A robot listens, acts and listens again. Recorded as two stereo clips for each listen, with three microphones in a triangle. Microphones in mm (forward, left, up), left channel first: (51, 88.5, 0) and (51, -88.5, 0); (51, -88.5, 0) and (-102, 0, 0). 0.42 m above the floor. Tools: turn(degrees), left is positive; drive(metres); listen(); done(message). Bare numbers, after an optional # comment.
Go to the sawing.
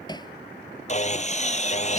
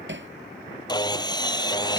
# The sawing: 40° left.
turn(40)
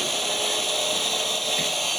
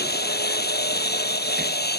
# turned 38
drive(1.0)
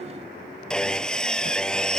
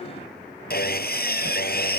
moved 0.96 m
drive(1.0)
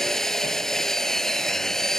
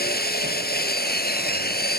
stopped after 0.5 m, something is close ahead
done("Blocked. The sawing is further on, straight ahead.")